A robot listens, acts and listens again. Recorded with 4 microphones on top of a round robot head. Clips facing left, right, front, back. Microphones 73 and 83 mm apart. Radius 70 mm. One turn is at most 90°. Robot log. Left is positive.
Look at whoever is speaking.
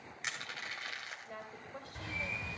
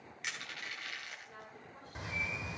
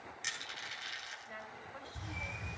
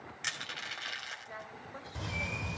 note: The woman speaking: 110° left.
cmd yaw +90
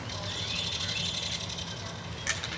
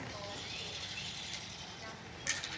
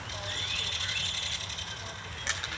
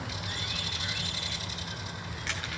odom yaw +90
note: Nothing new. It was at 20° left.
cmd yaw +20
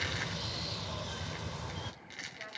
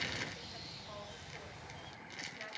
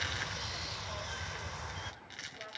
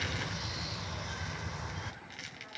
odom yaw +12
cmd idle
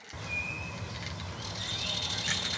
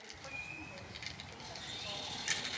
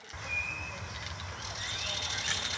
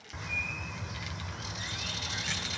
end: Facing where the woman speaking came from. I can't hear it now.